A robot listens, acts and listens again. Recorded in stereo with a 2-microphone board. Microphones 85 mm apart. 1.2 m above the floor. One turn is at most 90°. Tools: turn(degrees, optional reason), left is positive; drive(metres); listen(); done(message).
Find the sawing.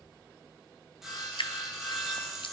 turn(degrees=-30)
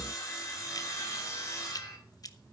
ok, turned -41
turn(degrees=35, reason="So it is at 35° left.")
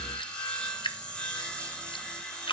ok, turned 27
turn(degrees=10, reason="The sawing is now 10° left.")
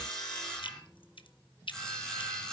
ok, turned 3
done("Facing the sawing.")